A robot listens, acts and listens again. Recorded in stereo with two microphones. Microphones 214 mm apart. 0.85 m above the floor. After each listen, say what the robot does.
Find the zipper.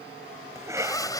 Turn 15° left.
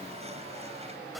Keep listening.
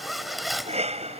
Found it: a zipper, straight ahead.